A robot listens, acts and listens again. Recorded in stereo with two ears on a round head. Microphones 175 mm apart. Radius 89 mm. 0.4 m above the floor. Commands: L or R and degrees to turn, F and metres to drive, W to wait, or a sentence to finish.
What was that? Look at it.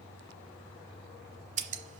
R35
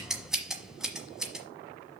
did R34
Facing the scissors, 1 to 2 m away.